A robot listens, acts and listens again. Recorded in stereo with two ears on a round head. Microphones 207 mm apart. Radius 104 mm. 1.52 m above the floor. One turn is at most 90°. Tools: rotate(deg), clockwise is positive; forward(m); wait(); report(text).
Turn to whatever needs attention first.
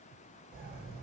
wait()
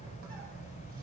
wait()
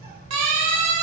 rotate(90)
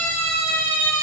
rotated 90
rotate(-10)
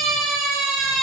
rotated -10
report("Facing the siren, over 4 m away.")